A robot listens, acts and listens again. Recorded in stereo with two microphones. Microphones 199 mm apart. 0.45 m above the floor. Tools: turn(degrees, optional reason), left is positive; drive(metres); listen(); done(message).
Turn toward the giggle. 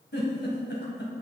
turn(degrees=70, reason="The giggle: about 70° left or 110° left.")
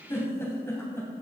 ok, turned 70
turn(degrees=15, reason="So it is at 15° left.")
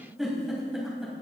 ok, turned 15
done("Facing the giggle.")